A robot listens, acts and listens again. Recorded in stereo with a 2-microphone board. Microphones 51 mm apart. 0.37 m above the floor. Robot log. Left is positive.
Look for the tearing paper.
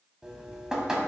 cmd idle
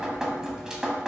cmd idle
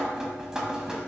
end: I can't make out tearing paper, only dripping.